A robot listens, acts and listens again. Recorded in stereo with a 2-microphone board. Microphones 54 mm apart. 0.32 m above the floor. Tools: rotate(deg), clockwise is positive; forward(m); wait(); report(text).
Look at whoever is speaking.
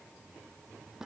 wait()
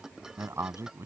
rotate(60)
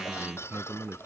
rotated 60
rotate(45)
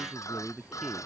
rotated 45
report("Found it: a man speaking, straight ahead.")